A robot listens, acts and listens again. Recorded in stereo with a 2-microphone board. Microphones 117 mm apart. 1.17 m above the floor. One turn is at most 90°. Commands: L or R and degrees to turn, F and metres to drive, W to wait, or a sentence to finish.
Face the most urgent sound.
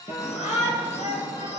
L90
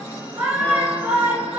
R10
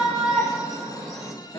Found it: a shout, straight ahead.